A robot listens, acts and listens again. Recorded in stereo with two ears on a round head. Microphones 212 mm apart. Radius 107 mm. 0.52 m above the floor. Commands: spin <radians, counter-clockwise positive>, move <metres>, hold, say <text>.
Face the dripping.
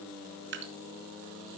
spin -0.87
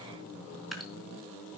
say Facing the dripping, 2 to 4 m away.